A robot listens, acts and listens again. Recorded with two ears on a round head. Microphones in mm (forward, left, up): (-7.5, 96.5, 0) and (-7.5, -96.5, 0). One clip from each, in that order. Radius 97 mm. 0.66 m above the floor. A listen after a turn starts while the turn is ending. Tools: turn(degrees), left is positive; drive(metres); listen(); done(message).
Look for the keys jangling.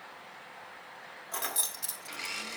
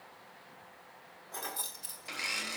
turn(degrees=65)
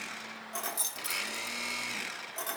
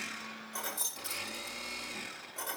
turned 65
turn(degrees=30)
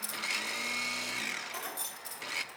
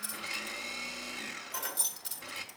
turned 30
turn(degrees=-10)
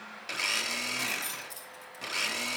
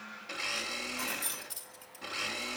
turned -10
done("Found it: keys jangling, straight ahead.")